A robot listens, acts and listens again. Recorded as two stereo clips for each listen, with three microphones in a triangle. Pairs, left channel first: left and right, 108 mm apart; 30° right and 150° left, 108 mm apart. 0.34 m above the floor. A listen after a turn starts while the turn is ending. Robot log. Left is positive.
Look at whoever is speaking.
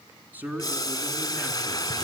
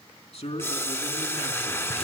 note: The man speaking: 15° right.
cmd yaw -15
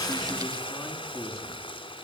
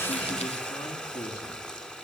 end: Facing the man speaking.